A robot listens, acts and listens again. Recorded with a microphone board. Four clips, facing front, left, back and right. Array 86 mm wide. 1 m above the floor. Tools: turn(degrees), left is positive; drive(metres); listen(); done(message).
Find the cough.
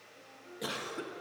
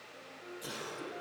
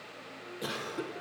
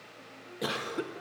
turn(degrees=-85)
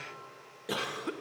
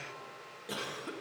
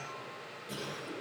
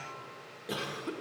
done("Found it: a cough, straight ahead, 1 to 2 m away.")